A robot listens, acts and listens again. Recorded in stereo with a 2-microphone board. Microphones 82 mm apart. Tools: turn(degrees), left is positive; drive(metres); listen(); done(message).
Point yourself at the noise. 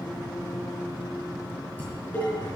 turn(degrees=20)
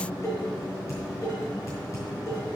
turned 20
turn(degrees=140)
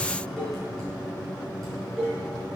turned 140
done("Found it: dishes clattering, straight ahead.")